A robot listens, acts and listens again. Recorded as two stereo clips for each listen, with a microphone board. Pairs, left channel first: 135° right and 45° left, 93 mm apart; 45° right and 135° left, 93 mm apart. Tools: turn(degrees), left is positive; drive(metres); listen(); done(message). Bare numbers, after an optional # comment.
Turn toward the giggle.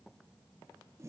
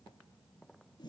listen()
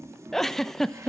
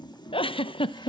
# The giggle: 50° right.
turn(-50)
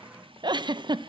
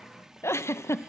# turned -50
# The giggle is now 15° left.
turn(15)
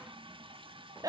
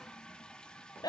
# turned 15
done("Facing the giggle, under 1 m away.")